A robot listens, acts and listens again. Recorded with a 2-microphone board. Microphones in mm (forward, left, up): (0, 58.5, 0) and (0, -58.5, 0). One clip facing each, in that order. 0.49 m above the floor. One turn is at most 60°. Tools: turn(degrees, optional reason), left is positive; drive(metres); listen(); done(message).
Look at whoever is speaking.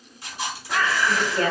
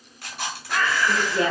turn(degrees=-30)
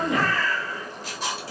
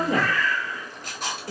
turn(degrees=-60, reason="So it is at 135° right.")
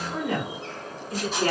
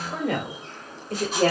turn(degrees=-60, reason="The woman speaking is now 85° right.")
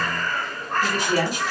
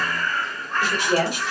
turn(degrees=-35, reason="The woman speaking is now 35° right.")
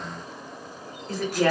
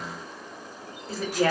done("Found it: a woman speaking, straight ahead, 1 to 2 m away.")